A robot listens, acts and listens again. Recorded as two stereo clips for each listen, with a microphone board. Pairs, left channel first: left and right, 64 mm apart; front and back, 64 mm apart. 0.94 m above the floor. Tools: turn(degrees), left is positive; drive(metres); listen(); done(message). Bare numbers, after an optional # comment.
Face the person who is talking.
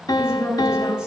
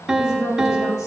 # The woman speaking: 15° right.
turn(-15)
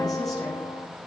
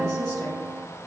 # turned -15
done("Found it: a woman speaking, straight ahead, over 4 m away.")